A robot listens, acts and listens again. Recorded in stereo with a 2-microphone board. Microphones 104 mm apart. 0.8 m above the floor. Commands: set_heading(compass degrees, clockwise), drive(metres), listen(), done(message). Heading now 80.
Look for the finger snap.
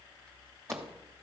listen()
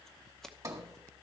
listen()
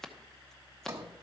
done("I can't make out a finger snap to turn to.")